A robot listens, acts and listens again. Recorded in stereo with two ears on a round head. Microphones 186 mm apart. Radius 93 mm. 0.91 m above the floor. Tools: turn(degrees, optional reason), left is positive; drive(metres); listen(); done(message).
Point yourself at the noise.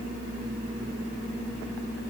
listen()
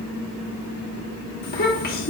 turn(degrees=50, reason="The child speaking: about 50° left or 130° left.")
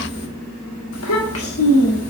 turn(degrees=80, reason="So it is at 80° left.")
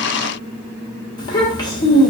turn(degrees=20, reason="The child speaking is now 20° left.")
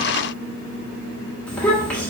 done("Facing the child speaking, 1 to 2 m away.")